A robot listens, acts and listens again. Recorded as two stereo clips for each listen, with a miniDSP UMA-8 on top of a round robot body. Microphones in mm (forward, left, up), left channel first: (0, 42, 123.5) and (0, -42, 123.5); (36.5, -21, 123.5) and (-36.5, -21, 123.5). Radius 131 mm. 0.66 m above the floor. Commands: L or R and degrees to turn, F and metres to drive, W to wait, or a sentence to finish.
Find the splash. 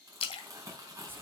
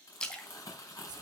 L80
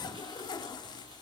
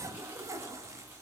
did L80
I heard a splash from this way, but can't make it out now.